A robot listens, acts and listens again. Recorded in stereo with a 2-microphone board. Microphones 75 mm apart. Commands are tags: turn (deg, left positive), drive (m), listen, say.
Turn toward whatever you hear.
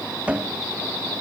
<turn deg="-20"/>
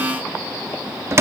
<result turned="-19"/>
<turn deg="-145"/>
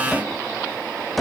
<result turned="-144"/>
<say>Found it: a cupboard door, straight ahead, under 1 m away.</say>